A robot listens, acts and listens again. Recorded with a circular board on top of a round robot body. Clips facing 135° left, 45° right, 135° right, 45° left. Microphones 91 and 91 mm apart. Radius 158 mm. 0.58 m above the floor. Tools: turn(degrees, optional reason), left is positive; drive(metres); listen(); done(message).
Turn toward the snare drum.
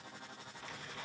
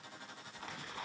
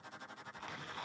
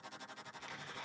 listen()
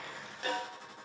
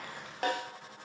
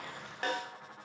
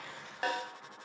turn(degrees=-35, reason="The snare drum: 35° right.")
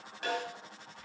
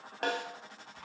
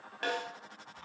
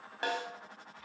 turn(degrees=-25, reason="The snare drum is now 25° right.")
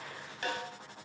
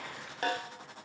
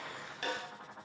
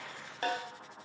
done("Found it: a snare drum, straight ahead, 2 to 4 m away.")